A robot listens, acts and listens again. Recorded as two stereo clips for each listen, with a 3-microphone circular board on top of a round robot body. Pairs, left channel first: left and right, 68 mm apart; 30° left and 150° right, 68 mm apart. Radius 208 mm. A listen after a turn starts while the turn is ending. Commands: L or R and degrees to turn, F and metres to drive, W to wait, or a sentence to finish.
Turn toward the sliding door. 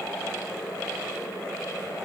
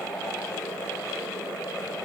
W
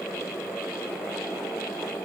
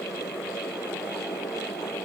W
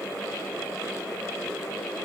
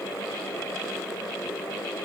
I can't make out a sliding door to turn to.